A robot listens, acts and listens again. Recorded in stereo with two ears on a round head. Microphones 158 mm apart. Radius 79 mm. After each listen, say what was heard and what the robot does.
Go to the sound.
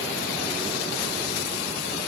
Keep listening.
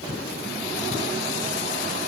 Keep listening.
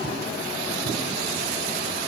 I can't make out anything.